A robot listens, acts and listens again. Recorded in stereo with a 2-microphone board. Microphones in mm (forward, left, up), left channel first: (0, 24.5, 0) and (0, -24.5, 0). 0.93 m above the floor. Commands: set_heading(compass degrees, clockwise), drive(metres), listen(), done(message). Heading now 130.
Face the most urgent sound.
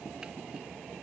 listen()
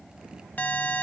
set_heading(95)
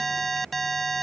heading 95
done("Found it: an alarm, straight ahead.")